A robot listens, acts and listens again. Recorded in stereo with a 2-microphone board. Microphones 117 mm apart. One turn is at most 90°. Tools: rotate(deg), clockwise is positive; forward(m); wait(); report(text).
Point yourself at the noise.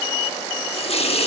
rotate(-55)
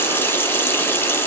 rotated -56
rotate(-20)
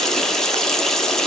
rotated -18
report("Facing the running tap, under 1 m away.")